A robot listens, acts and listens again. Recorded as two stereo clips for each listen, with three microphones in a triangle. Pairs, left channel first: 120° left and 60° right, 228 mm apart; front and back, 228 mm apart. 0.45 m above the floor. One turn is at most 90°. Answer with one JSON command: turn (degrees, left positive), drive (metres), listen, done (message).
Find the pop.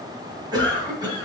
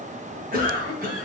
{"listen": true}
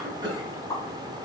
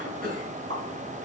{"turn": -90}
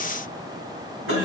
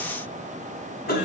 {"turn": -80}
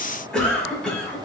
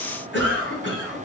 {"done": "Facing where the pop came from. I can't hear it now."}